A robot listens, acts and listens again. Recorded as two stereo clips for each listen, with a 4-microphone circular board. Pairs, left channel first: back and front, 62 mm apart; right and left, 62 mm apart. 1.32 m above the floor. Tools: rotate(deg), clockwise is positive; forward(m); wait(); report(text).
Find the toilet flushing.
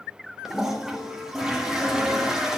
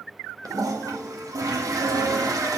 rotate(-80)
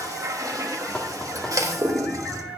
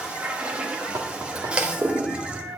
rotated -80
rotate(-15)
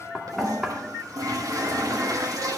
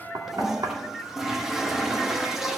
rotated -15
report("Found it: a toilet flushing, straight ahead, 1 to 2 m away.")